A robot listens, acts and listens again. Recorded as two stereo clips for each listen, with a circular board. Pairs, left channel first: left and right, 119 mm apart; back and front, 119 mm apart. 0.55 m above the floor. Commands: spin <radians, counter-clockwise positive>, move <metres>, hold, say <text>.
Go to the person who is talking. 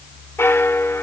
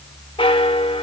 hold
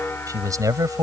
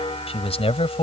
spin -2.62
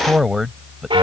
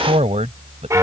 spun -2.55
move 1.0
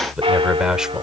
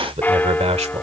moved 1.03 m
move 1.0
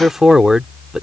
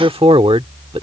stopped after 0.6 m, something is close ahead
say I am next to the man speaking.